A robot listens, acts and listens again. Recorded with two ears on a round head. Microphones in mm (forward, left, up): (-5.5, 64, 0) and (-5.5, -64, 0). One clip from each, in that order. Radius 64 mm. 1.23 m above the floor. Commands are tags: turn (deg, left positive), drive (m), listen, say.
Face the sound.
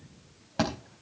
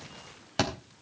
<turn deg="-75"/>
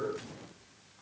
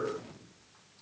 <listen/>
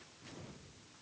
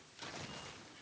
<say>I heard a thud, but can't make it out now. It was about straight ahead or 30° right.</say>